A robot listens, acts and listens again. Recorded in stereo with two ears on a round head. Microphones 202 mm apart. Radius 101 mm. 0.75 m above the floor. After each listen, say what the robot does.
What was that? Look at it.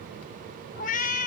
Turn 35° left.
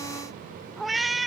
Found it: a cat meowing, straight ahead.